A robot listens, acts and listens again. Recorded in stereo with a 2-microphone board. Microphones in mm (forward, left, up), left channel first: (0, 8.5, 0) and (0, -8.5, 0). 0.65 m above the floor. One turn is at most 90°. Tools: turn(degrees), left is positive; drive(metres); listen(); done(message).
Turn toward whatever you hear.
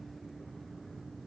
listen()
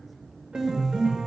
turn(degrees=-90)
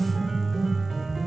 turn(degrees=-10)
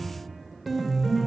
done("Found it: a piano, straight ahead.")